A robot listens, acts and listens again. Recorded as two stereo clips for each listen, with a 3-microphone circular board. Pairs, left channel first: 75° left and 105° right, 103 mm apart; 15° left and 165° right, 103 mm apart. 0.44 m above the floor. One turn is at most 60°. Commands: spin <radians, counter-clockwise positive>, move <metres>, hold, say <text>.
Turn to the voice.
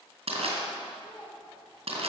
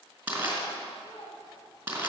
spin 0.26
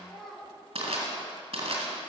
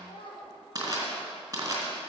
spin -0.17
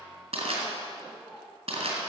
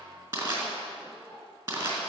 spin -0.35
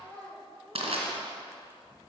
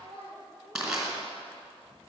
say Found it: a child speaking, straight ahead, over 4 m away.